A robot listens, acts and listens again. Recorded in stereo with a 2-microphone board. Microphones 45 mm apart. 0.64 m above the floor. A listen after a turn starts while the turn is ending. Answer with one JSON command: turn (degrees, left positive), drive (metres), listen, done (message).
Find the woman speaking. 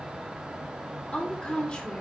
{"turn": 20}
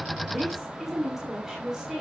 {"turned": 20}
{"turn": -15}
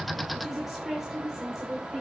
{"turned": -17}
{"turn": -15}
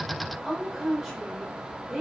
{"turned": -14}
{"turn": -10}
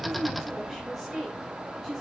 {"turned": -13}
{"done": "Facing the woman speaking, 2 to 4 m away."}